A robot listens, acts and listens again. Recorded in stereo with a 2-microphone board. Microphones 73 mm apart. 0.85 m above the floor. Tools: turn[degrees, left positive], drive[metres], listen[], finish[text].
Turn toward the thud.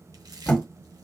Thought: The thud: about 20° left or 160° left.
Action: turn[20]
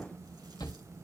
Action: listen[]
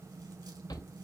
Action: finish[I heard a thud, but can't make it out now. It was about straight ahead or 140° left.]